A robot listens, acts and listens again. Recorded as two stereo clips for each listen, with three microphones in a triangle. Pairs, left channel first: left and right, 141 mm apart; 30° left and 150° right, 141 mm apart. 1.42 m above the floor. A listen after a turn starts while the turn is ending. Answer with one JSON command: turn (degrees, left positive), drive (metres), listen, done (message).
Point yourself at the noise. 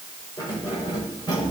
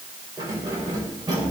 {"turn": 150}
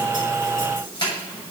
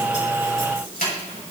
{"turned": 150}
{"turn": 35}
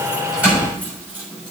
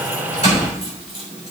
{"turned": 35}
{"turn": -15}
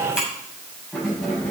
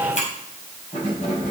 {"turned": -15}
{"done": "Found it: keys jangling, straight ahead, over 4 m away."}